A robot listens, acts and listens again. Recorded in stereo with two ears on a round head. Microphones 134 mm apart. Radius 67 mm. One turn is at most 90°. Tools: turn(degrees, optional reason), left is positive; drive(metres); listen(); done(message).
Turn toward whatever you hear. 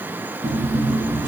turn(degrees=-50, reason="The phone buzzing: about 50° right or 130° right.")
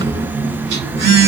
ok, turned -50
turn(degrees=-80, reason="So it is at 80° right.")
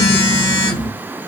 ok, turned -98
turn(degrees=20, reason="The phone buzzing is now 20° left.")
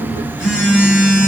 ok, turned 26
done("Facing the phone buzzing, 1 to 2 m away.")